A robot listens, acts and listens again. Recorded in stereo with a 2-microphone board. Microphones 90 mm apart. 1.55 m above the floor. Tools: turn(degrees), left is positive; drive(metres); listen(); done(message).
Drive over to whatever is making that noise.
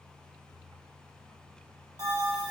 turn(degrees=-45)
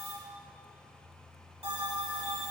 turn(degrees=-90)
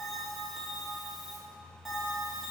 drive(metres=1.0)
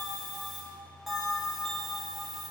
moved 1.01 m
drive(metres=1.0)
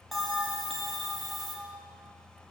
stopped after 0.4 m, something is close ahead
done("Arrived at the bell, straight ahead.")